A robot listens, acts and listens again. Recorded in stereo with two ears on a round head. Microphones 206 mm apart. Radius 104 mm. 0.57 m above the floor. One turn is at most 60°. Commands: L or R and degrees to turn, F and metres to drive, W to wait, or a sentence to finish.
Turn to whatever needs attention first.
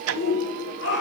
L55
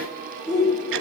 Facing the shout.